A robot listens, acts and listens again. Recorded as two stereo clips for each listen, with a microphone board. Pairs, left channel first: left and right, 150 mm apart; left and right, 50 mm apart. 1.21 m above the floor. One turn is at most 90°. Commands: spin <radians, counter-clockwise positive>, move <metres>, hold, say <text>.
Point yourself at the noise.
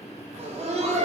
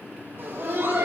spin -0.87
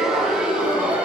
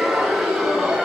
spin -0.17
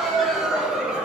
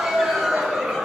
say Found it: laughter, straight ahead, 2 to 4 m away.